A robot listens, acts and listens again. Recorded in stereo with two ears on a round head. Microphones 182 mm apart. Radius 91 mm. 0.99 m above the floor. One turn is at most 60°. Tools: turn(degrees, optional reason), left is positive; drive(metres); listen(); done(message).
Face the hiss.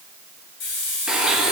turn(degrees=60, reason="The hiss: about 60° left or 120° left.")
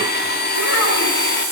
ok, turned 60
turn(degrees=55, reason="So it is at 55° left.")
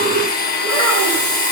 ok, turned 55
listen()
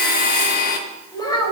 listen()
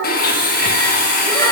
done("Facing where the hiss came from. I can't hear it now.")